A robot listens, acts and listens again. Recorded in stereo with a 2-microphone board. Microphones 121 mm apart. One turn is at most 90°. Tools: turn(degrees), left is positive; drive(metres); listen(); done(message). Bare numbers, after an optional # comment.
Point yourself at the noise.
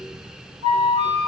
# The flute: about 60° right or 120° right.
turn(-60)
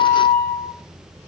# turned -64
# So it is at 55° right.
turn(-55)
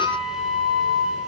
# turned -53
done("Facing the flute, 2 to 4 m away.")